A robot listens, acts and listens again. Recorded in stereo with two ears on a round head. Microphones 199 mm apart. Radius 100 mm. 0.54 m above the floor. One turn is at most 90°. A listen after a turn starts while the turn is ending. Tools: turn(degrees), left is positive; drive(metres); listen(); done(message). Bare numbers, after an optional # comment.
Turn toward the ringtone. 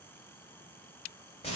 listen()
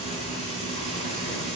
listen()
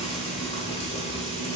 done("I can't make out a ringtone to turn to.")